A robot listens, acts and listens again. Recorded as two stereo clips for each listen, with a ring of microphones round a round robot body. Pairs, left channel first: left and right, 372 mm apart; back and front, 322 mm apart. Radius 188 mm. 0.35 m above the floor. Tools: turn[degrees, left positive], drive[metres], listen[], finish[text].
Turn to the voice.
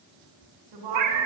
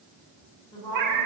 Thought: The woman speaking: 100° right.
Action: turn[-100]
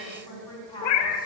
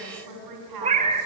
Thought: The woman speaking is now 10° left.
Action: turn[10]
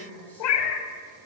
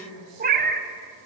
Action: finish[Facing the woman speaking.]